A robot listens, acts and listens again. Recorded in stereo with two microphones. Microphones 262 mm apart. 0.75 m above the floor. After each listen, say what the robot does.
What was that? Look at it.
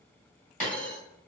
Turn 30° left.
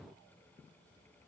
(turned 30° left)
Keep listening.
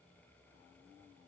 I heard a dropped coin, but can't make it out now. It was about straight ahead or 120° left.